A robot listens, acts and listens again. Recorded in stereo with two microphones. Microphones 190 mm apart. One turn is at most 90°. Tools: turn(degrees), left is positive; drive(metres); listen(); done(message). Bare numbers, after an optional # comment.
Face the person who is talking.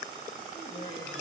# The woman speaking: about 35° left or 145° left.
turn(35)
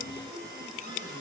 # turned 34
listen()
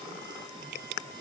listen()
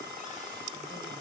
done("I heard a woman speaking, but can't make it out now. It was about straight ahead or 110° left.")